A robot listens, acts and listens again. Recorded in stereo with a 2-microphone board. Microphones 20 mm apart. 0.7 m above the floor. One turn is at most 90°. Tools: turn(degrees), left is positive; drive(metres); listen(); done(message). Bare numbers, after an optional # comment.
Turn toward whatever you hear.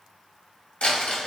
turn(90)
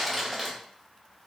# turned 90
# So it is at 10° right.
turn(-10)
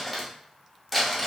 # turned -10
done("Facing the crumpling.")